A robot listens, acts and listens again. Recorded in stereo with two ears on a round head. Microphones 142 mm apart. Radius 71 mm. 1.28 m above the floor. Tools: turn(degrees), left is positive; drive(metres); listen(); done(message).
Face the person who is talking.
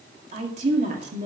turn(degrees=-45)
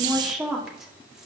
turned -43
done("Facing the woman speaking.")